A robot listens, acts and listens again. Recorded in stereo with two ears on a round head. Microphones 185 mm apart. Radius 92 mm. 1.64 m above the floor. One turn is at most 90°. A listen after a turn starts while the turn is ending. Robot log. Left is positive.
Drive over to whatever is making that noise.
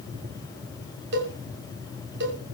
note: The cowbell: about 60° right or 120° right.
cmd yaw -60
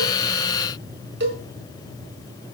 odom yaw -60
note: So it is at 55° right.
cmd yaw -55
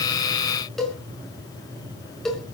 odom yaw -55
cmd fwd 1.0
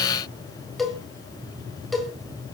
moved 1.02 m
cmd fwd 1.0
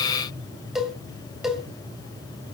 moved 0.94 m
cmd fwd 1.0
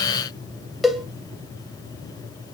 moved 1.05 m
cmd fwd 1.0
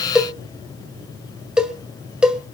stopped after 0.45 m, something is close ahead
end: Arrived at the cowbell, straight ahead.